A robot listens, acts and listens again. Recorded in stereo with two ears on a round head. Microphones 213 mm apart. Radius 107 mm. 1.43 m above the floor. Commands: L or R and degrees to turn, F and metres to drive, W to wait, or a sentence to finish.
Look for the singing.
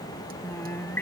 L30
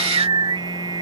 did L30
R20
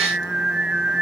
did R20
Found it: singing, straight ahead.